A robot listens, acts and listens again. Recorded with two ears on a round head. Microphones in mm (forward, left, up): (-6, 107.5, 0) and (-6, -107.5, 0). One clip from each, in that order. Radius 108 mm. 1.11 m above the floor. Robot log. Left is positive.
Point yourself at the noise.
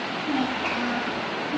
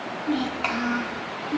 cmd yaw -90
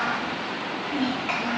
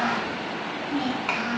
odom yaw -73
note: So it is at 30° right.
cmd yaw -30
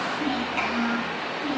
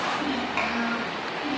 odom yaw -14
note: The child speaking is now 25° right.
cmd yaw -25
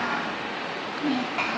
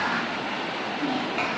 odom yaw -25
end: Facing the child speaking, over 4 m away.